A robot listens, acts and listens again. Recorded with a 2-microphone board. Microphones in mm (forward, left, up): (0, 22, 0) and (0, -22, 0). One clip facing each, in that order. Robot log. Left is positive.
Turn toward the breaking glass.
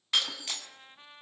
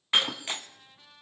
note: The breaking glass: about 30° right or 150° right.
cmd yaw -30
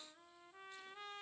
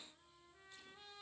cmd idle
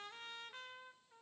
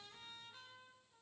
end: I heard breaking glass, but can't make it out now. It was about straight ahead or 120° right.